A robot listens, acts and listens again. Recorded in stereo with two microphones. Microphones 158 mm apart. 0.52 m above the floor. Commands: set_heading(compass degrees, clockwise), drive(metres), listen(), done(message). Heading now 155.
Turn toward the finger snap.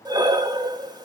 listen()
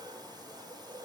listen()
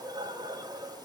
done("I can't make out a finger snap, only breathing.")